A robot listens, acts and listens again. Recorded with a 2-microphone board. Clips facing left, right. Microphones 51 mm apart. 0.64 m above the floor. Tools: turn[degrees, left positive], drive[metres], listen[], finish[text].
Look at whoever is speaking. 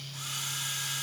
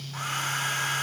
Action: listen[]
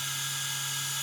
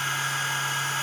Action: listen[]
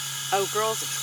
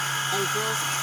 Thought: The woman speaking: about 55° left or 125° left.
Action: turn[55]
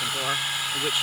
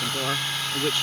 Thought: So it is at 10° left.
Action: turn[10]
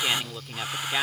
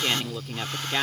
Action: finish[Facing the woman speaking.]